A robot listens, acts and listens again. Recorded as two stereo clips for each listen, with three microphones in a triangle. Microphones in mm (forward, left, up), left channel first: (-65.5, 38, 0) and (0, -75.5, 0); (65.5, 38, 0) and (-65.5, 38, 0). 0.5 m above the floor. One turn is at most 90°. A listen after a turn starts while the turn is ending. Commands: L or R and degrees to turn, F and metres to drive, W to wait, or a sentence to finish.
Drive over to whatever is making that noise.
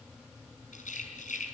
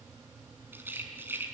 L90
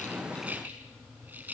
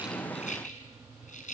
L15
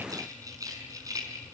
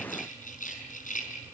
F1.0
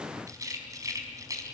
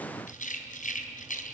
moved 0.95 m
F1.0
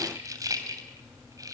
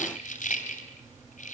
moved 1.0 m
F1.0
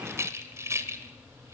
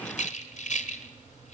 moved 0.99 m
F1.0
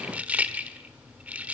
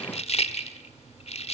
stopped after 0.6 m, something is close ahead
L15
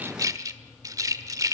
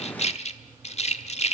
Arrived at the rattle, straight ahead.